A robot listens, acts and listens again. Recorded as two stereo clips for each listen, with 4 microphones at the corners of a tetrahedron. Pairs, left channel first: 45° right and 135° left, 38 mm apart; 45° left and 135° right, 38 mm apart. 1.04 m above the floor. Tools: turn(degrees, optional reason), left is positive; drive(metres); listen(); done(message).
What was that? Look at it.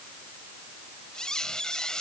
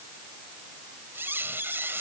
turn(degrees=-115, reason="The squeak: 115° right.")
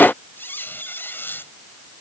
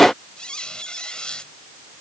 turn(degrees=-20, reason="The squeak is now 20° right.")
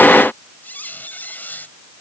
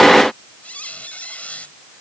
done("Found it: a squeak, straight ahead.")